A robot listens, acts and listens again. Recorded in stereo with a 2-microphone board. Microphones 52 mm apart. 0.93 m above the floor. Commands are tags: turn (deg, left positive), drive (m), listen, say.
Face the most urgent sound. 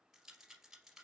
<listen/>
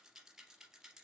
<listen/>
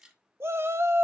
<turn deg="-50"/>
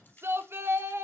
<turn deg="-65"/>
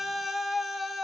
<say>Facing the shout, 1 to 2 m away.</say>